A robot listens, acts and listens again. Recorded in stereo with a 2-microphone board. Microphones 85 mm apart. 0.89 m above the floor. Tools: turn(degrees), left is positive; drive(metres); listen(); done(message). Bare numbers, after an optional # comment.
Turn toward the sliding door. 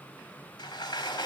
# The sliding door: about 65° left or 115° left.
turn(65)
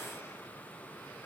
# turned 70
listen()
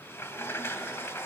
# So it is at 35° left.
turn(35)
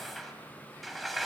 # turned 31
done("Found it: a sliding door, straight ahead.")